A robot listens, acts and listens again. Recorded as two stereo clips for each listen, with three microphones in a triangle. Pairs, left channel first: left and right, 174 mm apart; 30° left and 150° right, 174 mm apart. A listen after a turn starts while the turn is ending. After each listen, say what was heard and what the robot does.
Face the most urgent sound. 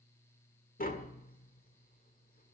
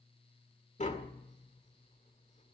Keep listening.
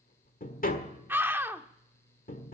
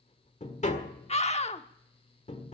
The scream: 15° right. Turn 15° right.
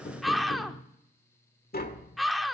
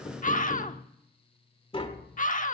Found it: a scream, straight ahead, 1 to 2 m away.